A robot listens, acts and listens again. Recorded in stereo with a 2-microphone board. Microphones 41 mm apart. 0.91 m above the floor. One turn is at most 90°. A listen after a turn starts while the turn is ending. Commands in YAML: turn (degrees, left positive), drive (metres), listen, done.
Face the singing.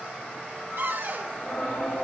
turn: 40
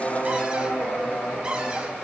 turn: 90
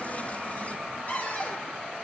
turn: 15
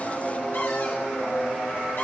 turn: 30
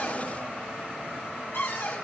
listen: true
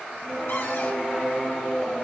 turn: 10
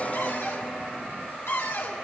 listen: true
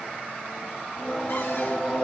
done: "Facing the singing."